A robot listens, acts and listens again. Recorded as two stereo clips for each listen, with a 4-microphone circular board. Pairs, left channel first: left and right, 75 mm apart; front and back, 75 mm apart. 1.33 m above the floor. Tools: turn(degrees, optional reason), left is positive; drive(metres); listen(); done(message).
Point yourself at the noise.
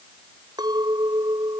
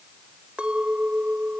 turn(degrees=-105, reason="The clink: 105° right.")
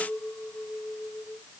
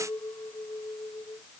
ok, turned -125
turn(degrees=20, reason="The clink is now 20° left.")
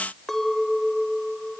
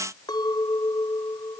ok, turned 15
done("Found it: a clink, straight ahead.")